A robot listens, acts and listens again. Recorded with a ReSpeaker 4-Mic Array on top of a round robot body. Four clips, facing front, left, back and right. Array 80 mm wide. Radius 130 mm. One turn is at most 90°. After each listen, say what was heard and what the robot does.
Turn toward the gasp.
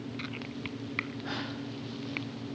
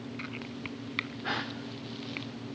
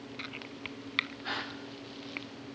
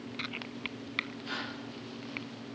The gasp: 105° left. Turn 90° left.
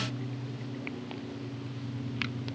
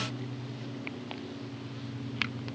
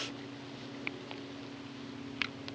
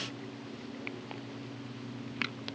Nothing new. It was at 15° left. Turn 15° left.
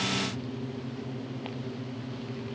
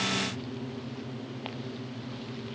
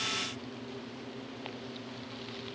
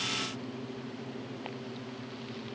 I heard a gasp from this way, but can't make it out now.